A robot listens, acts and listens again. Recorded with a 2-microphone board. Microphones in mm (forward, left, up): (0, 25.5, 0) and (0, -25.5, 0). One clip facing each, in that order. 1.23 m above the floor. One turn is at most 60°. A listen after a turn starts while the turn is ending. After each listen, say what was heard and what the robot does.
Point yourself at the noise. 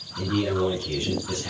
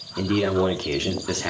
Turn 60° right.
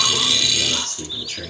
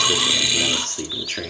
So it is at 45° right. Turn 45° right.
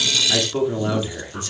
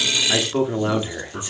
The man speaking is now 20° right. Turn 20° right.
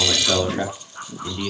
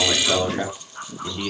Found it: a man speaking, straight ahead.